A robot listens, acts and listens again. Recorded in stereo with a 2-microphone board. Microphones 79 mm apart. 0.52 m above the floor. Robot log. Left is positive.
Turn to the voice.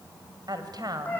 note: The woman speaking: about 50° right or 130° right.
cmd yaw -50
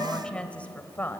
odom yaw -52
note: So it is at 25° left.
cmd yaw +25
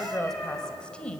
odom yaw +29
note: The woman speaking is now 15° left.
cmd yaw +15
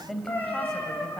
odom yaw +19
end: Found it: a woman speaking, straight ahead, 2 to 4 m away.